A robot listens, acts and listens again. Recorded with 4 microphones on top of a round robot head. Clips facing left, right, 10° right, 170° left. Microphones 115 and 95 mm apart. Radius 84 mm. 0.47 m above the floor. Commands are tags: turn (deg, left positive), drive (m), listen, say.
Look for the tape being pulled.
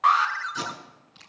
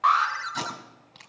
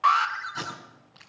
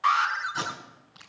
<turn deg="-105"/>
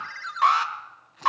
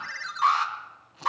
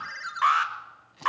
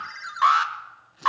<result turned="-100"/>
<say>Facing the tape being pulled, over 4 m away.</say>